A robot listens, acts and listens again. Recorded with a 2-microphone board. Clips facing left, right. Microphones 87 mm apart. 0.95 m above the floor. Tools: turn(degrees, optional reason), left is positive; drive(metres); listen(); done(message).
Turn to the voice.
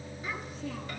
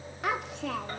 turn(degrees=-70, reason="The child speaking: about 70° right or 110° right.")
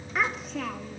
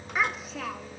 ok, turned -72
done("Found it: a child speaking, straight ahead.")